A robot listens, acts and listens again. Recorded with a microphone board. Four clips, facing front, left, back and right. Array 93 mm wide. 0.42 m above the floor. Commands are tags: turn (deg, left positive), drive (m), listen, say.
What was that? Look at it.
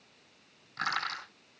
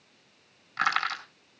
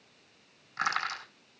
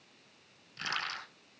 <turn deg="100"/>
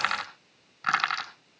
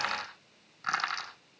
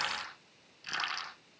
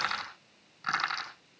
<say>Found it: crushing, straight ahead, over 4 m away.</say>